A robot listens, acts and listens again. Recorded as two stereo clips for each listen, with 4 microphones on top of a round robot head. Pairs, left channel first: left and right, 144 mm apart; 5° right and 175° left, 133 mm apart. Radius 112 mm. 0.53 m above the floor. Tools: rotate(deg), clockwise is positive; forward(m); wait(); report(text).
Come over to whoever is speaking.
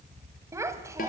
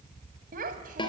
rotate(160)
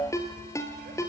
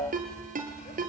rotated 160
wait()
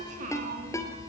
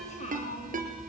rotate(50)
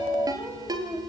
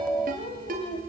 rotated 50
forward(1.0)
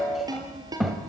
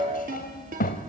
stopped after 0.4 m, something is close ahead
report("Something is in my way. I am facing the child speaking but have not reached it.")